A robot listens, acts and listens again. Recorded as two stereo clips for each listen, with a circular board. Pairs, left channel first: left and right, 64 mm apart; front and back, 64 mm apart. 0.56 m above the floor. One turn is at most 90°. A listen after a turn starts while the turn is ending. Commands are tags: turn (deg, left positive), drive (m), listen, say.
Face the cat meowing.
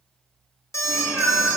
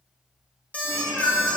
<turn deg="-25"/>
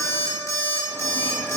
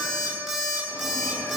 <listen/>
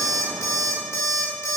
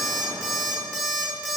<listen/>
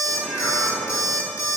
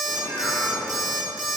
<say>Facing the cat meowing.</say>